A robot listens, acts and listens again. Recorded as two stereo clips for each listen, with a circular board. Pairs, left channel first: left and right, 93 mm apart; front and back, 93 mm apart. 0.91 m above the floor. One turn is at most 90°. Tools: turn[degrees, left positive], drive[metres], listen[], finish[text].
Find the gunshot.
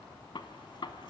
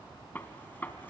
Thought: The gunshot: 65° left.
Action: turn[65]
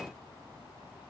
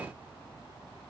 Action: finish[I heard a gunshot from this way, but can't make it out now.]